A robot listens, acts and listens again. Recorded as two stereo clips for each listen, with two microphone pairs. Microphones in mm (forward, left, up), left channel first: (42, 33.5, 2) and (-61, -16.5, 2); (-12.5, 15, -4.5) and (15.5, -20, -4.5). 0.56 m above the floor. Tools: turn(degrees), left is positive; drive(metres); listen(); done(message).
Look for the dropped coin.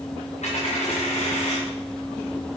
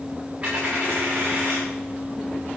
turn(degrees=10)
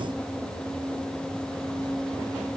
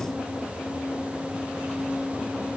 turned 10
done("I heard a dropped coin from this way, but can't make it out now.")